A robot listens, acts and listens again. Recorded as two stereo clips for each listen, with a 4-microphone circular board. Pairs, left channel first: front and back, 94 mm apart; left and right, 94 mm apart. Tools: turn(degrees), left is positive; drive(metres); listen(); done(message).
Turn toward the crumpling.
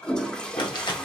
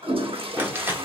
turn(degrees=-25)
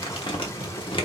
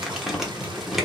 done("Facing the crumpling, 1 to 2 m away.")